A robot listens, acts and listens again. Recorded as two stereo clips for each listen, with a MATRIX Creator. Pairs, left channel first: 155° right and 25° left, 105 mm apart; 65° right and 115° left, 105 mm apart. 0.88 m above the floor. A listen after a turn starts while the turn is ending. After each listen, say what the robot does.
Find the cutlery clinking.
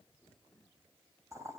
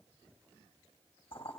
Keep listening.
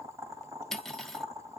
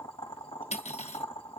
Turn 70° right.
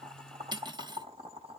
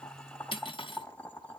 Turn 25° right.
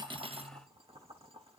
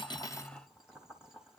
Keep listening.
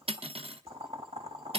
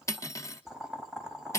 Facing the cutlery clinking, under 1 m away.